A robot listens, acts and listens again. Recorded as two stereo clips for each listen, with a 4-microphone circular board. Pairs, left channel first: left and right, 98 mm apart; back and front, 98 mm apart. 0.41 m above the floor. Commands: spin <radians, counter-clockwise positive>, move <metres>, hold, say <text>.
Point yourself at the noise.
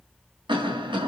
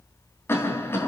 spin -2.01
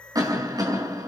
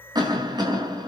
spin -0.70
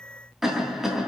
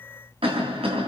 say Facing the cough, 2 to 4 m away.